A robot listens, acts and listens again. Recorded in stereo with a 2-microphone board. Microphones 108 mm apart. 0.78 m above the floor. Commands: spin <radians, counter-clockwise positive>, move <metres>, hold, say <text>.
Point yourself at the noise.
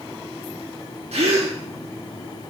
spin -1.57
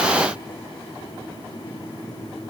say Facing where the gasp came from. I can't hear it now.